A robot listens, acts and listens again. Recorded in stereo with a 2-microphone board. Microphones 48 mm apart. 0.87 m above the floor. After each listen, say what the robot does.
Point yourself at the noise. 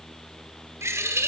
Turn 65° right.
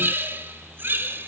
Turn 50° right.
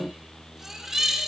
Turn 10° right.
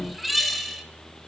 Facing the bird, 1 to 2 m away.